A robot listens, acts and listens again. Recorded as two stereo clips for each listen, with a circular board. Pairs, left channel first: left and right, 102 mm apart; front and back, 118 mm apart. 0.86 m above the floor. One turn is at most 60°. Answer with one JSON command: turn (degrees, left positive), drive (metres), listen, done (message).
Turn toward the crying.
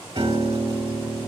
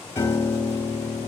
{"listen": true}
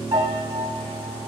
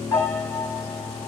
{"listen": true}
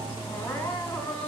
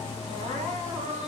{"turn": 60}
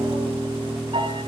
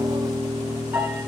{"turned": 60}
{"turn": 60}
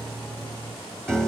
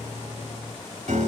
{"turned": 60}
{"turn": 45}
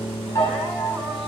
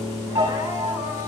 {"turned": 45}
{"done": "Facing where the crying came from. I can't hear it now."}